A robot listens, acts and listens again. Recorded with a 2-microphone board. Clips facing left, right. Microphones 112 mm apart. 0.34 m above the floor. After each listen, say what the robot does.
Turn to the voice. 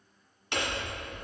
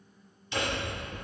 Keep listening.
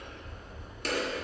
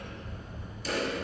Keep listening.
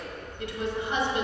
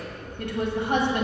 Turn 55° right.
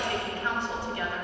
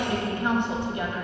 Turn 25° right.
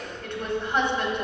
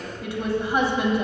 Turn 10° right.
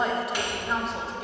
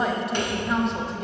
Facing the woman speaking.